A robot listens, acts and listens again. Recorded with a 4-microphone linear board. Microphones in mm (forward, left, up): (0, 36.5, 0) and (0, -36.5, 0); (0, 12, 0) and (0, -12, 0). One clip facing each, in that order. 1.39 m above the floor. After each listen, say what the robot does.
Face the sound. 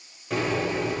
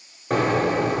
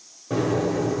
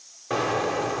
Turn 50° right.
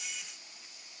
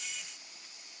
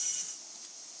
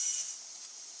Keep listening.
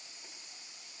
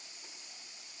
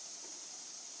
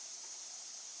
I heard an explosion, but can't make it out now. It was about straight ahead or 80° right.